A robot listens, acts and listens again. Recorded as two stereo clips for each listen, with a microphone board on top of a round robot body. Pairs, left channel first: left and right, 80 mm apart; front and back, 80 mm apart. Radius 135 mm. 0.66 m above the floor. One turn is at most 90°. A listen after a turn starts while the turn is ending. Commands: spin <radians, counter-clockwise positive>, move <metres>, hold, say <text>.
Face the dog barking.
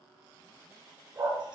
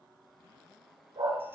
spin -1.57
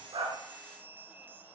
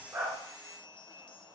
spin -0.96
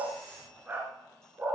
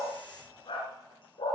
spin -0.35
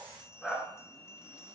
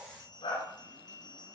say Facing the dog barking, 2 to 4 m away.